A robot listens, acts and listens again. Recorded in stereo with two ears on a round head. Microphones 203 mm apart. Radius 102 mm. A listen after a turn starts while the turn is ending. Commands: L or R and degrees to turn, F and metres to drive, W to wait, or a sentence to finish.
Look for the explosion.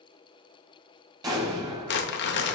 R20
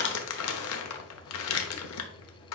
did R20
W
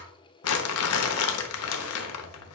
I heard an explosion, but can't make it out now. It was about straight ahead or 140° right.